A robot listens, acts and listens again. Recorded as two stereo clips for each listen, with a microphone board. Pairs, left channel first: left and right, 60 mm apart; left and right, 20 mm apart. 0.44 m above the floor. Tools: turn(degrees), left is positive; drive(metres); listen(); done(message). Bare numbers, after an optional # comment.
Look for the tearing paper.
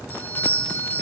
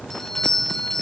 listen()
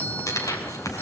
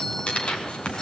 # The tearing paper: about 70° left or 110° left.
turn(70)
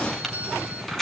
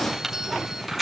done("Facing the tearing paper.")